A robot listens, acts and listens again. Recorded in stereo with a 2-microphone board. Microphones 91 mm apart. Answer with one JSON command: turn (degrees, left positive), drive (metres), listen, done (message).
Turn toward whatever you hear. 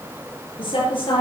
{"turn": 75}
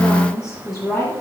{"done": "Found it: a woman speaking, straight ahead, over 4 m away."}